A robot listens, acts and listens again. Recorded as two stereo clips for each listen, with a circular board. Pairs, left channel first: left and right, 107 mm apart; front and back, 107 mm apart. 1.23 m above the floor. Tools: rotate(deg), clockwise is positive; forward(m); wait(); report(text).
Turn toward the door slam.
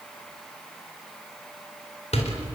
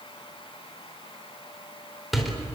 rotate(-90)
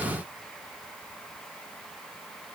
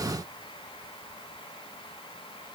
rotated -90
report("I heard a door slam from this way, but can't make it out now.")